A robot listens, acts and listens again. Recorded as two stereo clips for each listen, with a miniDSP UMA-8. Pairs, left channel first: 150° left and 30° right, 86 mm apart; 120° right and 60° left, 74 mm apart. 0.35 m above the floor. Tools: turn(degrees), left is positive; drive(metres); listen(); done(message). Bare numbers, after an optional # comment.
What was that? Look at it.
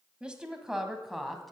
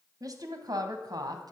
# The woman speaking: 60° left.
turn(60)
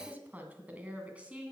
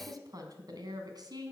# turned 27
# The woman speaking is now 45° left.
turn(45)
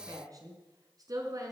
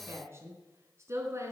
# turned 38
# The woman speaking is now 15° left.
turn(15)
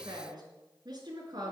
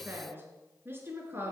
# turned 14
done("Facing the woman speaking.")